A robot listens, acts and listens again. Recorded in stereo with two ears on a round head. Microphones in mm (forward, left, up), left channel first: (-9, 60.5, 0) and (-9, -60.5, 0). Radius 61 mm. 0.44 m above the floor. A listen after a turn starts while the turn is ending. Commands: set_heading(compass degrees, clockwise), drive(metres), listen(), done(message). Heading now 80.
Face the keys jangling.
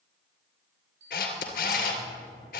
set_heading(55)
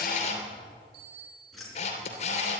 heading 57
done("Found it: keys jangling, straight ahead.")